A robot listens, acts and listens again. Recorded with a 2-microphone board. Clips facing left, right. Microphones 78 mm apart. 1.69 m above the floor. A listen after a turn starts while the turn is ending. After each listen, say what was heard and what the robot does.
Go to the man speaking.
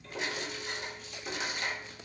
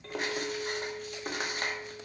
Keep listening.
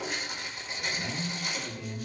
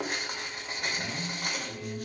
Turn 30° left.
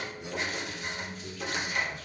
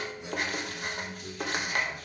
So it is at 30° right. Turn 30° right.
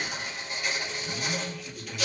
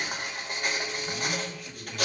Drive 1.0 m forward.
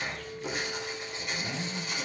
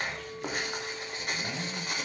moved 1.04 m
Drive 1.0 m forward.
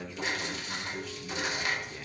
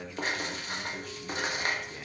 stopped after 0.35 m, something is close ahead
The man speaking is now 10° right. Turn 10° right.
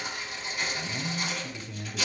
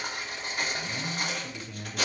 I am next to the man speaking.